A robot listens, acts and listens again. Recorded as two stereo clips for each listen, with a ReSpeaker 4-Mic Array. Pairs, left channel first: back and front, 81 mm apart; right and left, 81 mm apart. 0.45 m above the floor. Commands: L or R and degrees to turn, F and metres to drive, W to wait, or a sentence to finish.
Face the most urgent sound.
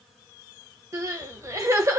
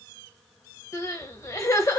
R40
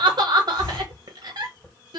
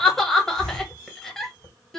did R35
Facing the crying.